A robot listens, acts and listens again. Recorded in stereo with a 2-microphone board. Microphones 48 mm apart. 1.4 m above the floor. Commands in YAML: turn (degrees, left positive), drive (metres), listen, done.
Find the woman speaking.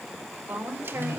turn: -45
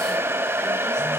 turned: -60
listen: true
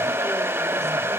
listen: true
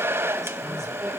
done: "I heard a woman speaking, but can't make it out now. It was about 15° left or 75° right."